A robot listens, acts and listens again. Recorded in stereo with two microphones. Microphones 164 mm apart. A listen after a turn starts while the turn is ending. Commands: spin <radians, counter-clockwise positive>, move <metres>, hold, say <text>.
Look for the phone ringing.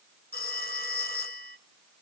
spin 1.13
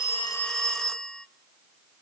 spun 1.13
say Facing the phone ringing.